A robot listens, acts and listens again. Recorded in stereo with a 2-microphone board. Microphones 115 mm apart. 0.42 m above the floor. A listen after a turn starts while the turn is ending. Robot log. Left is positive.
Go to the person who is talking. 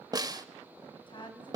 note: The woman speaking: about 40° left or 140° left.
cmd yaw +40
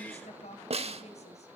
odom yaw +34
note: So it is at 100° left.
cmd yaw +100
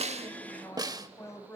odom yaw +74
note: The woman speaking is now 25° left.
cmd yaw +25
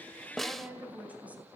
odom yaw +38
note: The woman speaking is now 15° right.
cmd yaw -15
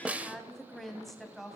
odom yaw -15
cmd fwd 1.0
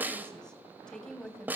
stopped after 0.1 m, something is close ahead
end: Something is in my way. I am facing the woman speaking but have not reached it.